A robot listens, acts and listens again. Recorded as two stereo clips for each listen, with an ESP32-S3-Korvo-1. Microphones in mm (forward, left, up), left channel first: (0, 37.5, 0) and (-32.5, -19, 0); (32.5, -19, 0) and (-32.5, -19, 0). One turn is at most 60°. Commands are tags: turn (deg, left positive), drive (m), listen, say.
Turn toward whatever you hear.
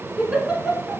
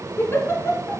<turn deg="-45"/>
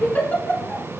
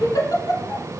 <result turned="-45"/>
<say>Found it: a giggle, straight ahead.</say>